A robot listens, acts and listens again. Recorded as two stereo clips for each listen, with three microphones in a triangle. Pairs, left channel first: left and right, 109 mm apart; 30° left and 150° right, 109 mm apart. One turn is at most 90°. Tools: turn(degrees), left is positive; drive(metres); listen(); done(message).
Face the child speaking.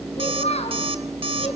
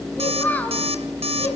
turn(degrees=90)
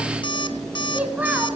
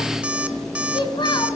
turn(degrees=-15)
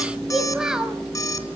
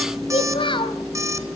done("Found it: a child speaking, straight ahead.")